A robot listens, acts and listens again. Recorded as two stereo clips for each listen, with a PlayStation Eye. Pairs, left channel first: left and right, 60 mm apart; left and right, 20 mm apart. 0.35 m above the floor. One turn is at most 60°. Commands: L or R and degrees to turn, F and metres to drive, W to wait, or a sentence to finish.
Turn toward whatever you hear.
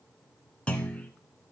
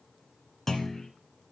L20
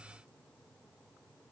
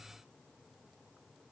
W
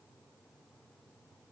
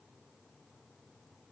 I heard a clunk, but can't make it out now. It was about straight ahead or 140° left.